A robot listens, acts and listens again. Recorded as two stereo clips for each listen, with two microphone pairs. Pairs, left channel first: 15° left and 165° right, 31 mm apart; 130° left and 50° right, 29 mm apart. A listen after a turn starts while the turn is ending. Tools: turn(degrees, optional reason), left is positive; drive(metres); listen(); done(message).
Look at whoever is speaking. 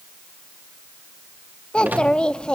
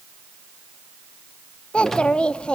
turn(degrees=75, reason="The child speaking: 75° left.")
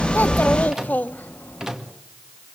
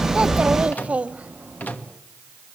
turn(degrees=-10, reason="The child speaking is now 10° right.")
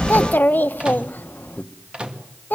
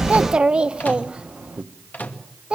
done("Found it: a child speaking, straight ahead.")